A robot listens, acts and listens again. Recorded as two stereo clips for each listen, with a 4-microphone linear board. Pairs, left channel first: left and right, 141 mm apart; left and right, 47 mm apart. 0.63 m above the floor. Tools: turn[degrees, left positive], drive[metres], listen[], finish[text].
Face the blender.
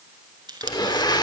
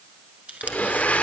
Thought: The blender: about 30° left or 150° left.
Action: turn[30]
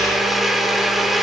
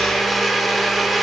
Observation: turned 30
Action: finish[Facing the blender, 1 to 2 m away.]